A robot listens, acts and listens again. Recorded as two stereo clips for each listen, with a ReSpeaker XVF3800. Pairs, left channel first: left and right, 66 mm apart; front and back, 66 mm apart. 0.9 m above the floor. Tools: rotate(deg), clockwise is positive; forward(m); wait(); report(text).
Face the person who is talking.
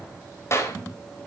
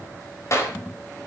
wait()
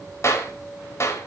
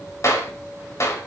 wait()
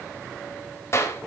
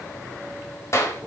report("I can't make out anyone speaking, only a clap.")